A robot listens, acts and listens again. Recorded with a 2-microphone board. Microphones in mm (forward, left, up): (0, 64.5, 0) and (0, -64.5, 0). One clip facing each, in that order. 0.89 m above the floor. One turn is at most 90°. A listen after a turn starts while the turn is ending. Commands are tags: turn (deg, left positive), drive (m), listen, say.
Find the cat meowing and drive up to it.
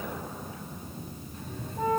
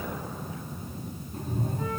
<turn deg="-45"/>
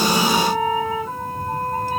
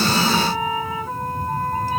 <drive m="1.0"/>
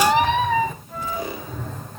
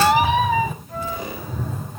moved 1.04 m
<drive m="1.0"/>
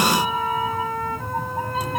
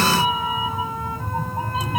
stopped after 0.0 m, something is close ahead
<say>I am next to the cat meowing.</say>